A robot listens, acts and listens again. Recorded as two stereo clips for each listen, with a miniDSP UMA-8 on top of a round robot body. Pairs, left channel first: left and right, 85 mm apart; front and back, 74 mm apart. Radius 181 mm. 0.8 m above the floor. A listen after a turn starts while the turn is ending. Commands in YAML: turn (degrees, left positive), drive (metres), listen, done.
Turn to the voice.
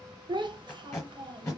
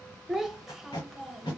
turn: -95
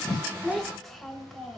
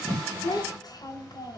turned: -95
done: "Found it: a child speaking, straight ahead, under 1 m away."